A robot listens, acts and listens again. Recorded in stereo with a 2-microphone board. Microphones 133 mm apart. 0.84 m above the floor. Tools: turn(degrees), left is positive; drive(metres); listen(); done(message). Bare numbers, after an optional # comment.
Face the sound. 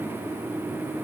listen()
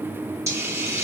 # The hiss: about 20° right or 160° right.
turn(-20)
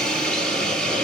done("Found it: a hiss, straight ahead.")